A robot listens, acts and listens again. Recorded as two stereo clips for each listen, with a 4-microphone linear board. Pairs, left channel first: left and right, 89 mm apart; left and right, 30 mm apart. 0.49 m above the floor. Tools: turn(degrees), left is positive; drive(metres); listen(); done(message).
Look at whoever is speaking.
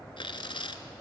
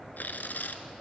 listen()
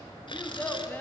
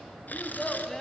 turn(degrees=25)
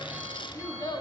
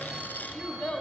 turn(degrees=130)
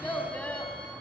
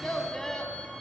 turn(degrees=15)
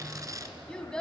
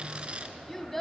turn(degrees=10)
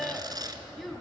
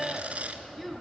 done("Facing the child speaking, 2 to 4 m away.")